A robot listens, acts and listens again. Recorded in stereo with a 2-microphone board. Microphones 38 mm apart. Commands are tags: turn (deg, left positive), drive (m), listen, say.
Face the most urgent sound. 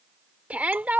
<turn deg="-40"/>
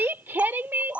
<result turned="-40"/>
<turn deg="-90"/>
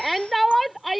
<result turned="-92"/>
<say>Facing the shout.</say>